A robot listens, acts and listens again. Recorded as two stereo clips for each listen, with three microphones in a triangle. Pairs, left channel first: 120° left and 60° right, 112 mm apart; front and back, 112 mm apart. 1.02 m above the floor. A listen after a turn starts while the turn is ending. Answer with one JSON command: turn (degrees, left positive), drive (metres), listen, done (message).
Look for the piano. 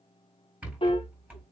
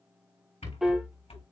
{"turn": 95}
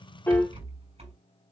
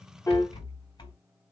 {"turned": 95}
{"listen": true}
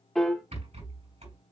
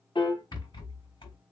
{"turn": 30}
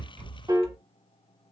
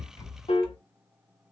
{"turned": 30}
{"turn": -10}
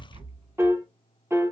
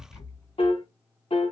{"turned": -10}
{"done": "Found it: a piano, straight ahead."}